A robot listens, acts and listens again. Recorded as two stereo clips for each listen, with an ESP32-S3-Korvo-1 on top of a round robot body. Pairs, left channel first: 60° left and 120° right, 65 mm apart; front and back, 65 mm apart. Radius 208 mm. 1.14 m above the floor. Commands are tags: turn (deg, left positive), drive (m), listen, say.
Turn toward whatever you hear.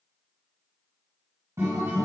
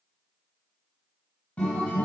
<turn deg="-70"/>
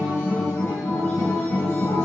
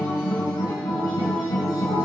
<say>Facing the guitar, 2 to 4 m away.</say>